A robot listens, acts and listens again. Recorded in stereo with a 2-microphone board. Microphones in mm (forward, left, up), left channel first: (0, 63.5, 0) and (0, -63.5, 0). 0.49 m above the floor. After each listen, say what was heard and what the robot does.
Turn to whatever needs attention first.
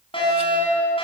The fire alarm: about 45° left or 135° left. Turn 45° left.
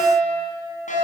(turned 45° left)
So it is at 90° left. Turn 90° left.
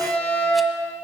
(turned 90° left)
The fire alarm is now 10° left. Turn 10° left.
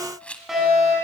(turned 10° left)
Facing the fire alarm, over 4 m away.